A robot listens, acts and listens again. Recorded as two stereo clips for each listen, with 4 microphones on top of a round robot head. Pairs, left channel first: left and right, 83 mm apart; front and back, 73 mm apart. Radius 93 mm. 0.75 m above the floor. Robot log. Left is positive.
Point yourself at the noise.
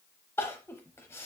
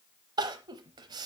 note: The crying: 160° left.
cmd yaw +160
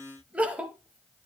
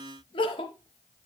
note: The crying is now 15° right.
cmd yaw -15
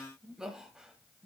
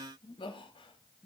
end: Facing the crying, under 1 m away.